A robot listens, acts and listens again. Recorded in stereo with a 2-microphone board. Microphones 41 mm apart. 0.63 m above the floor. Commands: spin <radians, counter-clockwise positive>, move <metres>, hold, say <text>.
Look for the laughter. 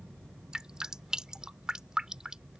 hold
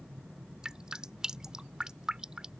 hold
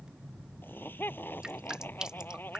spin 0.87
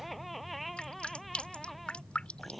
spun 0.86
say Facing the laughter.